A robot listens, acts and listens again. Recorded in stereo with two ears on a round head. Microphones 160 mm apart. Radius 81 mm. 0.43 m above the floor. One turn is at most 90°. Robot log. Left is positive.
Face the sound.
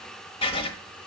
note: The writing: about 35° left or 145° left.
cmd yaw +35
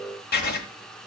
note: So it is at 110° left.
cmd yaw +90
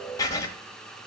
note: The writing is now 20° left.
cmd yaw +20
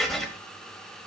end: Facing the writing.